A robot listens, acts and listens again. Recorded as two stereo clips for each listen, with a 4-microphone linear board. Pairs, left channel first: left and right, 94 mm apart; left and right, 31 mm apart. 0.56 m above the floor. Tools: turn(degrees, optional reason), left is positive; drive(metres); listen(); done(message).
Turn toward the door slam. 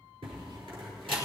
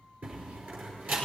turn(degrees=-70, reason="The door slam: about 70° right or 110° right.")
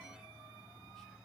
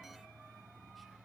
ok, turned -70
listen()
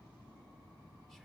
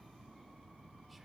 done("I heard a door slam, but can't make it out now. It was about straight ahead or 40° right.")